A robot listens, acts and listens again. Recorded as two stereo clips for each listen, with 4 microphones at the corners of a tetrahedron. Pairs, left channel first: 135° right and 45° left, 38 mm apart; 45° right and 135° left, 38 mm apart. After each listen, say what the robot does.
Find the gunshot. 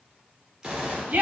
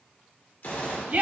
Turn 30° right.
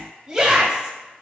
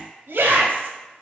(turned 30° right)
Facing where the gunshot came from. I can't hear it now.